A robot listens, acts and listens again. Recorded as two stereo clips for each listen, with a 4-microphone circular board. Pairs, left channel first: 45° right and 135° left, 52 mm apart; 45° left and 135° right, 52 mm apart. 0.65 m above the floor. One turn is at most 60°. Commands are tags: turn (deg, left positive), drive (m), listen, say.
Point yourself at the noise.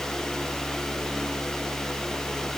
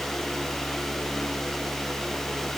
<listen/>
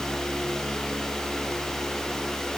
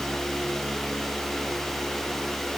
<listen/>
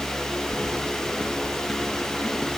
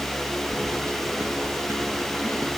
<turn deg="-60"/>
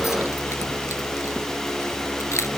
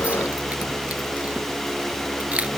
<turn deg="-60"/>
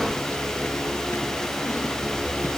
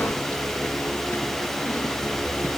<say>Facing the keys jangling.</say>